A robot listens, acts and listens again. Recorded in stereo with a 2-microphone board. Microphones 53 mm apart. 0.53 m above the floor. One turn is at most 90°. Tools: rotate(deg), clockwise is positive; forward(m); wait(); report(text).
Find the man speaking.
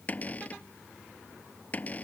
wait()
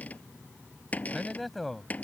rotate(-30)
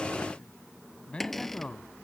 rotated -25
rotate(-90)
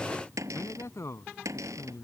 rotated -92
rotate(-65)
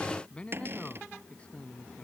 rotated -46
rotate(-25)
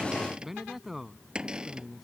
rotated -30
report("Found it: a man speaking, straight ahead.")